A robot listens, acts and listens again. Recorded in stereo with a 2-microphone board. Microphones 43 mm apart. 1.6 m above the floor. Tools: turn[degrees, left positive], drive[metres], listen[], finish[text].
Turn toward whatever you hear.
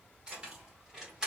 Action: turn[-30]
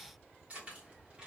Thought: The keys jangling: about 25° right or 155° right.
Action: turn[-25]
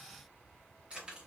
Thought: The keys jangling: about 25° right or 155° right.
Action: turn[-25]
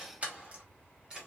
Thought: The keys jangling: about 15° right or 165° right.
Action: turn[-15]
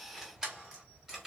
Action: turn[-30]
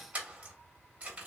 Thought: So it is at 145° right.
Action: turn[-145]
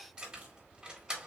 Thought: The keys jangling is now 20° right.
Action: turn[-20]
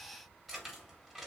Action: finish[Found it: keys jangling, straight ahead.]